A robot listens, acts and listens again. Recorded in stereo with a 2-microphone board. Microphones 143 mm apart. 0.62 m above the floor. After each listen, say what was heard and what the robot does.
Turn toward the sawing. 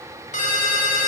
Keep listening.
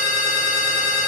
Keep listening.
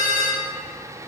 I can't make out sawing, only a ringtone.